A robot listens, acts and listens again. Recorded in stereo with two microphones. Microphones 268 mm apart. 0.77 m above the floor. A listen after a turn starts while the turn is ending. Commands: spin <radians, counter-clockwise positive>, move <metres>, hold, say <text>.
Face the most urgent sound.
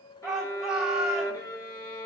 spin 0.52
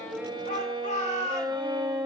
spin 2.62
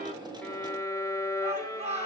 spin -0.44
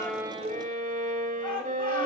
hold
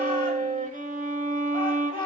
spin 0.35
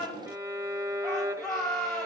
say Found it: a shout, straight ahead, over 4 m away.